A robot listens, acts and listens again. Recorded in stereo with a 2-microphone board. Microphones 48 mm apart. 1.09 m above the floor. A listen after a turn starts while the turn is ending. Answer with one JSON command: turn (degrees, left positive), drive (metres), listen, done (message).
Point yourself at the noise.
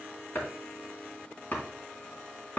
{"turn": 35}
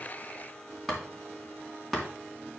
{"done": "Facing the chopping."}